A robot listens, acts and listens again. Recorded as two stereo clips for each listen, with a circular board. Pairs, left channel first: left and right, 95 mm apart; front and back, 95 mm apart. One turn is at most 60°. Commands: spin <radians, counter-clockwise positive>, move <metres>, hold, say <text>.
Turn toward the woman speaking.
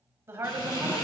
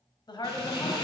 spin -0.52
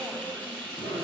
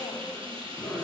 hold
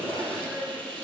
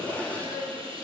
spin 0.17
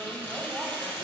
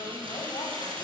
hold
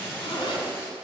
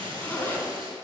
hold
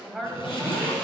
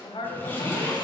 say Facing the woman speaking, 1 to 2 m away.